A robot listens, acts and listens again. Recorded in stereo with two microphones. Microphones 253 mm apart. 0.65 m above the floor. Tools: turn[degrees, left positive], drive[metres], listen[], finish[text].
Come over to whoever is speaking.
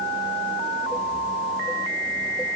Action: listen[]
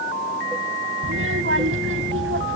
Thought: The child speaking: about 55° right or 125° right.
Action: turn[-55]
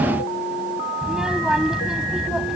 Action: drive[1.0]
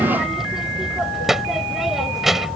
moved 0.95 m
Action: drive[1.0]
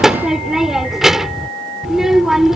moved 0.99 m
Action: drive[1.0]
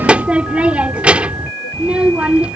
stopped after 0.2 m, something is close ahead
Action: finish[Arrived at the child speaking, straight ahead.]